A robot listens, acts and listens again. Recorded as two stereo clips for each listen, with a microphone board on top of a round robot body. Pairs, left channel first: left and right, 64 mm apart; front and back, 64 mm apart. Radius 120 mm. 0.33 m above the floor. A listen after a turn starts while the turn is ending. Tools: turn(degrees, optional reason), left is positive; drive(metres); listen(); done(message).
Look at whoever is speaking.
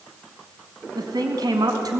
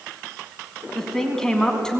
turn(degrees=-80, reason="The woman speaking: 80° right.")
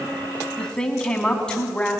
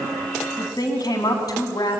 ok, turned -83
turn(degrees=15, reason="The woman speaking is now 15° left.")
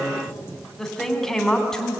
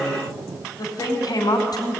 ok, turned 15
turn(degrees=10, reason="The woman speaking is now 10° left.")
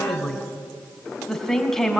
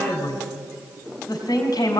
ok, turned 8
done("Found it: a woman speaking, straight ahead.")